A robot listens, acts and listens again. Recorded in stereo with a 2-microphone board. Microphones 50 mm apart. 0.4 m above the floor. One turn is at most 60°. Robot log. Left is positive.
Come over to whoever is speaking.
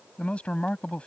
note: The man speaking: about 25° left or 155° left.
cmd yaw +25
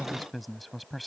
cmd fwd 1.0
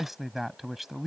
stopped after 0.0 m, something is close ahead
end: Something is in my way. I am facing the man speaking but have not reached it.